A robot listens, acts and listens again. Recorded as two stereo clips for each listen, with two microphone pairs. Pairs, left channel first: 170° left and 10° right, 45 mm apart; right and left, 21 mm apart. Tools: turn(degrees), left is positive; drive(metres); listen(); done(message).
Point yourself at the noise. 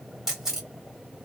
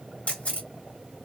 turn(degrees=-85)
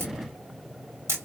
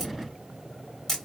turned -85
done("Facing the camera shutter, 1 to 2 m away.")